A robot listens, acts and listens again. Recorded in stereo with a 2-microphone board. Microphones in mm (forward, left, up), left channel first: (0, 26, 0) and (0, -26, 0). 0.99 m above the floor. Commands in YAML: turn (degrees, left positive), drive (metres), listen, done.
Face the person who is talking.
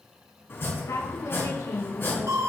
turn: 90
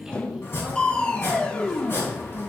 turn: -10
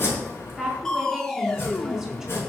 done: "Found it: a woman speaking, straight ahead."